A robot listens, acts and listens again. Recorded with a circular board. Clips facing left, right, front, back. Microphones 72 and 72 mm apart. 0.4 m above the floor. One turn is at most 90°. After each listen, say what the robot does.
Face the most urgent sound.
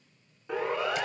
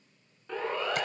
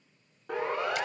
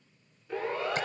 Turn 10° left.
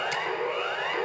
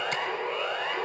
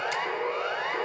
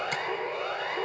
Facing the siren, over 4 m away.